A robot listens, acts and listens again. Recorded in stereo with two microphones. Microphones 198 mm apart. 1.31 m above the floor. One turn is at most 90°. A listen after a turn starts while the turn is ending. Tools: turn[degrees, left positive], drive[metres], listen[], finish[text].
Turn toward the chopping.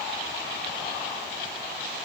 Action: listen[]
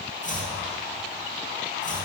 Thought: The chopping: about 40° left or 140° left.
Action: turn[40]
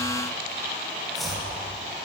Action: finish[Facing the chopping.]